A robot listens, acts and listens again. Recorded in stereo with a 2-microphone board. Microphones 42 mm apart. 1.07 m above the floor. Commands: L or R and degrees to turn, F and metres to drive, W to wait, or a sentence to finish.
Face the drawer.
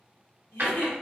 R50
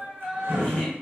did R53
R80
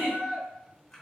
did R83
W
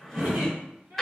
Found it: a drawer, straight ahead.